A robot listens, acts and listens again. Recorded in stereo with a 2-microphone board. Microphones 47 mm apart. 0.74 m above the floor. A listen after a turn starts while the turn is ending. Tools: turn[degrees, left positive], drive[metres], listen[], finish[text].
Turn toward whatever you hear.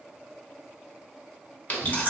Thought: The chewing: about 35° left or 145° left.
Action: turn[35]
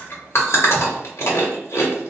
Thought: So it is at 110° left.
Action: turn[110]
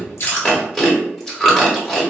Thought: The chewing is now 10° left.
Action: turn[10]
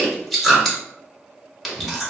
Action: finish[Facing the chewing, under 1 m away.]